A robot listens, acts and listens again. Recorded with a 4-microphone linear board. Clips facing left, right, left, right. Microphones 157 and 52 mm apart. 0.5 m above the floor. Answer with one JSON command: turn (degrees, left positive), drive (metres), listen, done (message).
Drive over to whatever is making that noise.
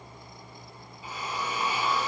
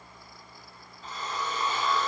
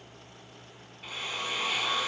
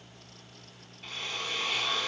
{"turn": 30}
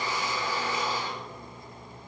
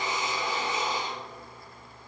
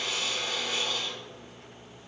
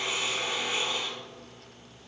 {"turn": -20}
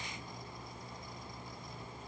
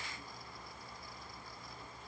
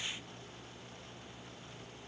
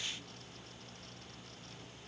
{"listen": true}
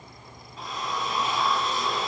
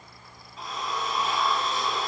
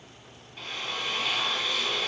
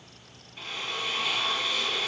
{"drive": 1.0}
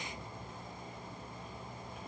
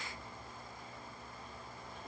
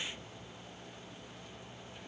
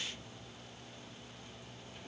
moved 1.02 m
{"listen": true}
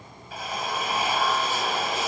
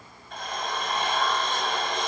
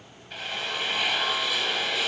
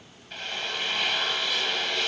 {"drive": 1.0}
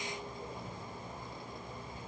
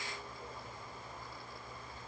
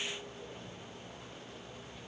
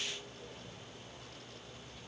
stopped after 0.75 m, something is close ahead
{"listen": true}
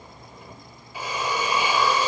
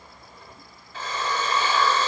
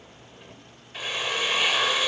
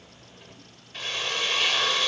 {"turn": 15}
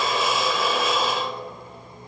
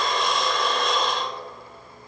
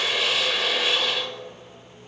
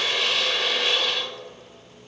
{"done": "Arrived at the drill, straight ahead."}